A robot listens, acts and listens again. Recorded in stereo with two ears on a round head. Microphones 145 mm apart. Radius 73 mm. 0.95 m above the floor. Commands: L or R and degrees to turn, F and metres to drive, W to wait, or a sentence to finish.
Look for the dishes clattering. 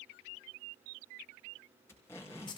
W
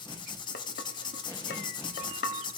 L70
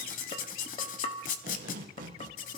L35
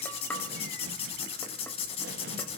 L10
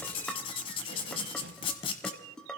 Facing the dishes clattering.